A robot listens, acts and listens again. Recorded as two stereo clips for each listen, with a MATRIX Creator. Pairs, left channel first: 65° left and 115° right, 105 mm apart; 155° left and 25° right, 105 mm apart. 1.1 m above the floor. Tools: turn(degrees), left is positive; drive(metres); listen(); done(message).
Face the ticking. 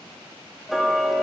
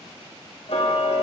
turn(degrees=160)
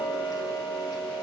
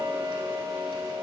turn(degrees=20)
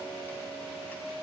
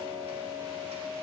done("Found it: ticking, straight ahead, 2 to 4 m away.")